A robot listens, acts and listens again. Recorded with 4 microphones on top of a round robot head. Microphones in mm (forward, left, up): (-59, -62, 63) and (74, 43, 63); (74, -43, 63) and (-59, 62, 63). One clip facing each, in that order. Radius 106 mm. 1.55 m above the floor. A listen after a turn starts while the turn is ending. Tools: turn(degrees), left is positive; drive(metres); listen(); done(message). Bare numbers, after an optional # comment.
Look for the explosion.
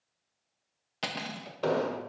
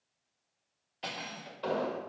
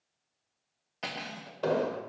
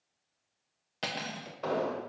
# The explosion: 100° right.
turn(-100)
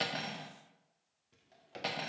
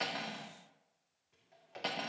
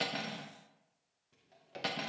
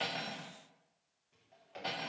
done("Facing where the explosion came from. I can't hear it now.")